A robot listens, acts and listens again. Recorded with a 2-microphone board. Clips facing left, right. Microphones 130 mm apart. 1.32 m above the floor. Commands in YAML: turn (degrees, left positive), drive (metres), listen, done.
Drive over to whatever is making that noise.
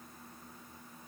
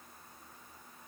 listen: true
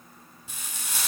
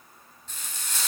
turn: 30
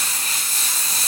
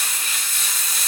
turn: 140
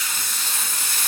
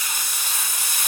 turn: -15
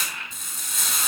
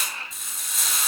drive: 1.0
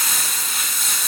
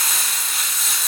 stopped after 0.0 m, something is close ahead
done: "Blocked. The frying is further on, straight ahead."